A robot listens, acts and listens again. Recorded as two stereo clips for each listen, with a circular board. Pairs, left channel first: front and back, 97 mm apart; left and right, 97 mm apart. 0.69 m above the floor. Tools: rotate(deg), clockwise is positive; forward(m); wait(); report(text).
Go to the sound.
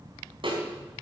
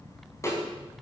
rotate(-150)
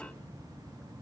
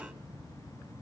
wait()
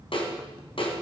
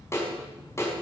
rotate(-25)
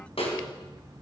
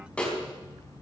rotate(-10)
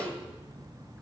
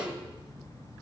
wait()
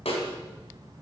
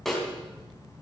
forward(1.0)
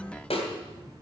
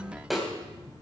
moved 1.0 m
forward(1.0)
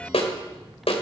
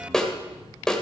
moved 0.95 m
forward(1.0)
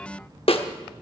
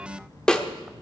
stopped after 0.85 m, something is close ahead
rotate(-10)
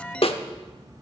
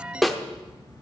report("Arrived at the snare drum, straight ahead.")